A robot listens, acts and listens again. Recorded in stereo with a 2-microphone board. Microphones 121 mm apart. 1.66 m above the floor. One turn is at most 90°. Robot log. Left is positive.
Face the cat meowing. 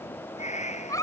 note: The cat meowing: about 75° left or 105° left.
cmd yaw +75
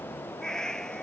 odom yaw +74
end: Facing the cat meowing.